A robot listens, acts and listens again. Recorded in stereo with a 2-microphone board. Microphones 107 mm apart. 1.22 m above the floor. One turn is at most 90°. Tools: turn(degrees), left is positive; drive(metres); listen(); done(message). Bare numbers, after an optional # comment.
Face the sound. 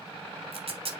# The tape being pulled: about 65° right or 115° right.
turn(-65)
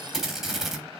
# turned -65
done("Facing the tape being pulled.")